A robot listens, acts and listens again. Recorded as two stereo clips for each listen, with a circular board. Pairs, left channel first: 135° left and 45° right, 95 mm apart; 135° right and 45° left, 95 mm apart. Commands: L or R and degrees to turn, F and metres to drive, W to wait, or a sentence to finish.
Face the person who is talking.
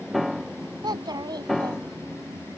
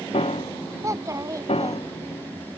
Facing the child speaking.